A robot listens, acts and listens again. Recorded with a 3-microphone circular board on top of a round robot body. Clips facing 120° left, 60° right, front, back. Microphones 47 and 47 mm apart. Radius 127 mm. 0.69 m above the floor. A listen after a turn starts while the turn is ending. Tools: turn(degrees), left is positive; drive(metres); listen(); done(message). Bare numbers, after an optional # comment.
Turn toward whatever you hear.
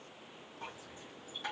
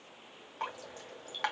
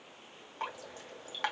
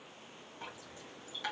# The dripping: 35° right.
turn(-35)
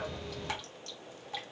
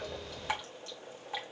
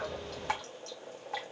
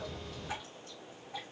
# The dripping is now 15° left.
turn(15)
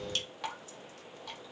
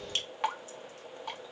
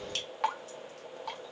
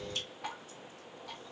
done("Found it: dripping, straight ahead, 1 to 2 m away.")